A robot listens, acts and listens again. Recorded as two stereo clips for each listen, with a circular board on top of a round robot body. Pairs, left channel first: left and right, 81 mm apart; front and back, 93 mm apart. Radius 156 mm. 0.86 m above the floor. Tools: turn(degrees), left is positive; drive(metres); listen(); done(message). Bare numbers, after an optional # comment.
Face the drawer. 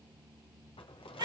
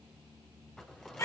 # The drawer: 85° left.
turn(85)
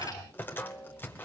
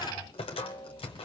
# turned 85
# The drawer is now 25° left.
turn(25)
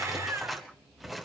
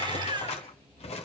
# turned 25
done("Found it: a drawer, straight ahead.")